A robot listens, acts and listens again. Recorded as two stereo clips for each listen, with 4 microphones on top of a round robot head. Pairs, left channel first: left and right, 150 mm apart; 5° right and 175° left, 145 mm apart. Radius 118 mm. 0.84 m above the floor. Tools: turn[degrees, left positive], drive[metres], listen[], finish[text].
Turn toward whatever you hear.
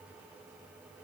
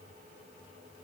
Action: listen[]
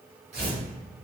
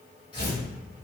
Thought: The tearing paper: 60° right.
Action: turn[-60]
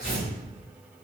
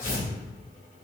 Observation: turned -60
Action: finish[Facing the tearing paper.]